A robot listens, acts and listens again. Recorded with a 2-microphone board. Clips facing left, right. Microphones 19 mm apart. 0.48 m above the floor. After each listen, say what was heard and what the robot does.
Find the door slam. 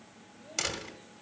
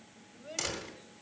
The door slam: about 25° left or 155° left. Turn 25° left.
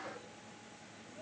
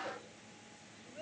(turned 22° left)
Keep listening.
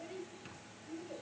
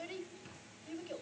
I heard a door slam, but can't make it out now. It was about straight ahead or 135° left.